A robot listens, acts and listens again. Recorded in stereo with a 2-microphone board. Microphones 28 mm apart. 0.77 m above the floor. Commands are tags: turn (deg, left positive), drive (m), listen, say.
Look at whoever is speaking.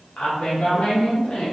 <turn deg="55"/>
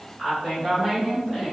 <say>Found it: a woman speaking, straight ahead, 2 to 4 m away.</say>